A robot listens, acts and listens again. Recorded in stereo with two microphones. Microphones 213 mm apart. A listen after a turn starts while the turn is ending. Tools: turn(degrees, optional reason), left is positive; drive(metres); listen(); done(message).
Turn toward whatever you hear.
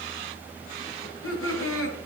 turn(degrees=75, reason="The laughter: about 75° left or 105° left.")
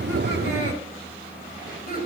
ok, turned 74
turn(degrees=40, reason="So it is at 40° left.")
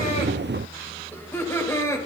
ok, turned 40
turn(degrees=10, reason="The laughter is now 10° left.")
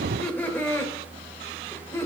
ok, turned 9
turn(degrees=10, reason="The laughter is now 10° left.")
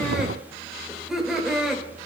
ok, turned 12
done("Found it: laughter, straight ahead, 2 to 4 m away.")